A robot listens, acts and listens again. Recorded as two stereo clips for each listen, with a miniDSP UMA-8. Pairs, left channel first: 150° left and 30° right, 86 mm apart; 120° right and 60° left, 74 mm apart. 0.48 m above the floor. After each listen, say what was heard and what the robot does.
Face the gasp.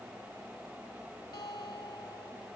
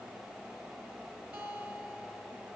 Keep listening.
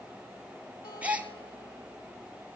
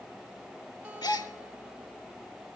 The gasp: 105° right. Turn 105° right.
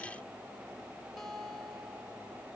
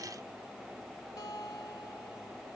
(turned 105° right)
I heard a gasp from this way, but can't make it out now.